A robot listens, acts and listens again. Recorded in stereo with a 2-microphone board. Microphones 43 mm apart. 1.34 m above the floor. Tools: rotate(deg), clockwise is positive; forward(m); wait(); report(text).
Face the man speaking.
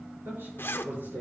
rotate(55)
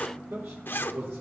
rotate(75)
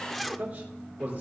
rotate(30)
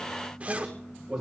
report("Found it: a man speaking, straight ahead, over 4 m away.")